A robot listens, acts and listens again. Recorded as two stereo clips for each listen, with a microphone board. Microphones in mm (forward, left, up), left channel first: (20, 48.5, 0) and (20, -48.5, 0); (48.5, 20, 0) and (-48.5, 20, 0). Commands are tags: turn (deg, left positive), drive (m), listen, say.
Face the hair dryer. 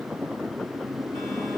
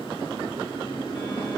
<listen/>
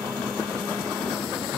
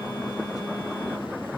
<listen/>
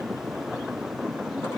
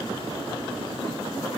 <say>I can't make out a hair dryer.</say>